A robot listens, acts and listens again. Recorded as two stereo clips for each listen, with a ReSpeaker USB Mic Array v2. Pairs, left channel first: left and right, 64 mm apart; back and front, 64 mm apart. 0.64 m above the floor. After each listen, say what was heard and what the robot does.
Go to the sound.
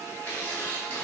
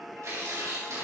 The tearing paper: 30° left. Turn 30° left.
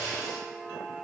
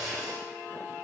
Drive 1.0 m forward.
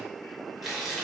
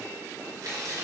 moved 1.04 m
Drive 1.0 m forward.
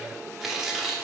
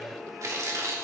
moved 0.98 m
Drive 1.0 m forward.
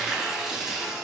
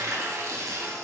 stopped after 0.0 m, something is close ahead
The tearing paper is now 10° right. Turn 10° right.
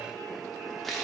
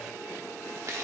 Arrived at the tearing paper, straight ahead.